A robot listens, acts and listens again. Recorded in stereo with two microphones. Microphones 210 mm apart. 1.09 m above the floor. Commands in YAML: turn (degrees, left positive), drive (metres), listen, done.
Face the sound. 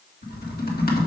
turn: 45
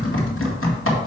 turn: 85
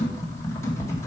turn: 15
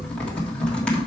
done: "Found it: typing on a keyboard, straight ahead, 1 to 2 m away."